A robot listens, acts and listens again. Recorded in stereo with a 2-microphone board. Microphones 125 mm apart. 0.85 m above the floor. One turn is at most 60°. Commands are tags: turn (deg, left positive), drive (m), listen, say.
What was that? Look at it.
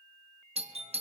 <turn deg="-55"/>
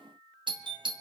<turn deg="-50"/>
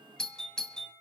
<say>Facing the doorbell.</say>